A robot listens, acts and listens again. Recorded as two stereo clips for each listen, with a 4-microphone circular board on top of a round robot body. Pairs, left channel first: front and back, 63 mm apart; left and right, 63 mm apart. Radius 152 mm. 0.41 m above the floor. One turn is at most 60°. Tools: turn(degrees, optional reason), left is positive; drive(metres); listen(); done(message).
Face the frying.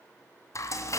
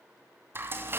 turn(degrees=-40, reason="The frying: 40° right.")
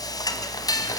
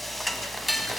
done("Facing the frying, 1 to 2 m away.")